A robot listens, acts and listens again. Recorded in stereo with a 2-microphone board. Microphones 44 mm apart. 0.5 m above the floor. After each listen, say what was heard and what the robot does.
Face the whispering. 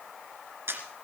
Keep listening.
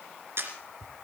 The whispering: about 55° left or 125° left. Turn 55° left.
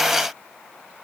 Keep listening.
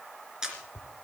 So it is at 50° left. Turn 50° left.
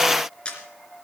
Keep listening.
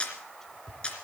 The whispering is now 15° left. Turn 15° left.
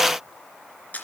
Keep listening.
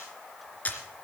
Keep listening.
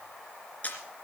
I heard whispering from this way, but can't make it out now.